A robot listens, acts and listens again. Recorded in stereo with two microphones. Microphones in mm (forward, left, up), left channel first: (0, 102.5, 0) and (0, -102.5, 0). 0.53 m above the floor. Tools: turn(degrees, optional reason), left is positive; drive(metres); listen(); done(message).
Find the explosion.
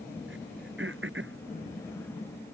listen()
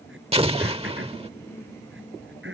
turn(degrees=-30, reason="The explosion: about 30° right or 150° right.")
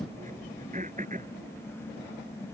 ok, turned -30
listen()
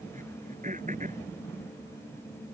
done("I heard an explosion, but can't make it out now. It was about straight ahead or 120° right.")